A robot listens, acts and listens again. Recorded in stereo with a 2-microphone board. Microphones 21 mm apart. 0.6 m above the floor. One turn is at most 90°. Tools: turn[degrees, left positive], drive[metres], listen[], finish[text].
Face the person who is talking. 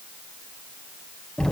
Action: listen[]
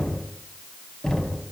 Action: listen[]
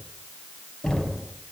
Action: finish[I can't make out anyone speaking to turn to.]